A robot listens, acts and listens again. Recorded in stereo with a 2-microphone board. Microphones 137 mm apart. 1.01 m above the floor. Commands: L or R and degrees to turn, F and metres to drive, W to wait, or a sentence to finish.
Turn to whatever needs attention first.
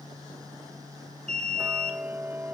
R55
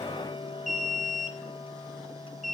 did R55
R70
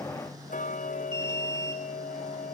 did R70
R35
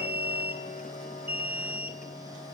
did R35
R15
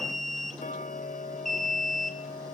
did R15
Facing the alarm.